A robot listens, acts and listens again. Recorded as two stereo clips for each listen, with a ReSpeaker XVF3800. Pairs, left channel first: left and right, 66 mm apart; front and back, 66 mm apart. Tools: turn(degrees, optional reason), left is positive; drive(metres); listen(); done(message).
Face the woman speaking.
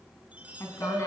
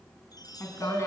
turn(degrees=50, reason="The woman speaking: 50° left.")
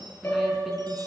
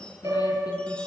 listen()
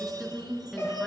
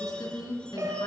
done("Found it: a woman speaking, straight ahead.")